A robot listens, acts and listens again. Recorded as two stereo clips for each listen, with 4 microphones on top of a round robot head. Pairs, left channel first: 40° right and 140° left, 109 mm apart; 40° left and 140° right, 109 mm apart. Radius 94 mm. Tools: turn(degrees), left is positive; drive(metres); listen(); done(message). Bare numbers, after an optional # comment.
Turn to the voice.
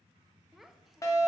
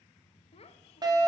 # The child speaking: 50° left.
turn(50)
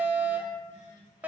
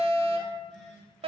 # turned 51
listen()
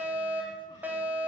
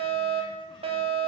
listen()
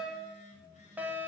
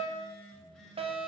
done("Facing where the child speaking came from. I can't hear it now.")